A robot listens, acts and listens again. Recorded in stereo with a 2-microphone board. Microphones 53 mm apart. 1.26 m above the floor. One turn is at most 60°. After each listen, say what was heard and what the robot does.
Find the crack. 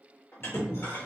The crack: about 25° left or 155° left. Turn 25° left.
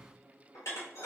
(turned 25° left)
Keep listening.
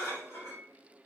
I heard a crack, but can't make it out now. It was about straight ahead or 130° left.